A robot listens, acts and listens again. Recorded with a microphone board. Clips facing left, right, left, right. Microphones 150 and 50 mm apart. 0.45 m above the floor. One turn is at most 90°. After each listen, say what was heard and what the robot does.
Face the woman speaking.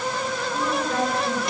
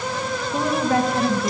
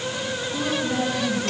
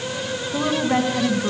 The woman speaking: about 75° right or 105° right. Turn 75° right.
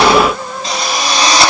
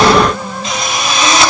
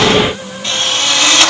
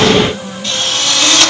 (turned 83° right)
Keep listening.
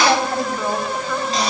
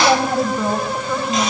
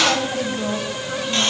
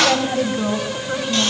So it is at 15° right. Turn 15° right.
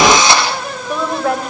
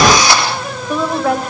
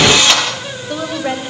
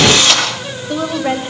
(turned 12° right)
Facing the woman speaking, 2 to 4 m away.